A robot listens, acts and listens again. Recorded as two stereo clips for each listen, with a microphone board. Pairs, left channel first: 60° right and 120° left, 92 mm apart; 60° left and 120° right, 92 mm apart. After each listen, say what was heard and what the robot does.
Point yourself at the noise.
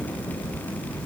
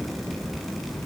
Keep listening.
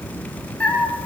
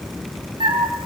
The cat meowing: 135° right. Turn 135° right.
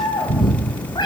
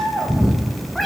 The cat meowing is now 25° right. Turn 25° right.
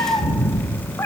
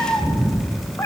Facing the cat meowing, 2 to 4 m away.